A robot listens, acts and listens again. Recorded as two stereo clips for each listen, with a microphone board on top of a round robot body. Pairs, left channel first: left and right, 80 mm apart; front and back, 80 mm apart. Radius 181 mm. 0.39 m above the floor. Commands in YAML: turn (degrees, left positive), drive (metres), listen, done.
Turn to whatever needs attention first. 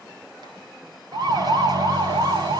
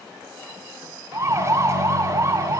turn: -125
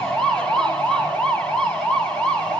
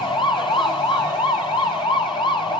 turn: 10
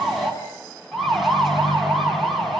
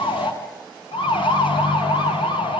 done: "Found it: a siren, straight ahead."